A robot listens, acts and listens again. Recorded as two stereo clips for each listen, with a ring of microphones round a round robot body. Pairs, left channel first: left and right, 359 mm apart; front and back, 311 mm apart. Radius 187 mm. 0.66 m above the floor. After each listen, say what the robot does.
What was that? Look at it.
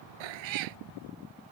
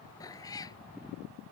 Turn 80° right.
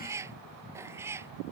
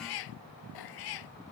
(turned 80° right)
Found it: a cat meowing, straight ahead.